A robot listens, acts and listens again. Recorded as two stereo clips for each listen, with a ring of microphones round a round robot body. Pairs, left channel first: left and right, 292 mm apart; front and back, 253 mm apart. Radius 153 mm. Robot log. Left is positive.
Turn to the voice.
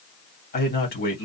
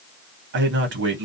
note: The man speaking: 145° left.
cmd yaw +145
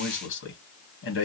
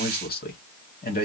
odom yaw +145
note: The man speaking is now 50° left.
cmd yaw +50
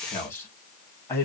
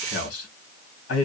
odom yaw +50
note: The man speaking is now 10° left.
cmd yaw +10
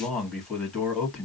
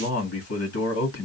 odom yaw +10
end: Found it: a man speaking, straight ahead, 1 to 2 m away.